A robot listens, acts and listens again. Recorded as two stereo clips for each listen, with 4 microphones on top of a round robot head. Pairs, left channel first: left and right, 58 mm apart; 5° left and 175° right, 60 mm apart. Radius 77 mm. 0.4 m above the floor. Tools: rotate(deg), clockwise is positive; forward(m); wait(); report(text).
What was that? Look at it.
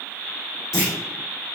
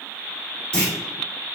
rotate(-75)
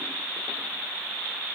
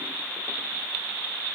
report("Facing where the clunk came from. I can't hear it now.")